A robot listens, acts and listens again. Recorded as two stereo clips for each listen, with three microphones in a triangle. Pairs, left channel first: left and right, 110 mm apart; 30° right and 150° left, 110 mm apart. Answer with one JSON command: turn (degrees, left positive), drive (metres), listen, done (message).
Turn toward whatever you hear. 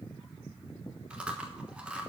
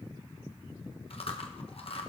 {"turn": -10}
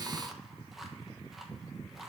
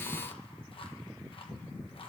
{"done": "Found it: chewing, straight ahead."}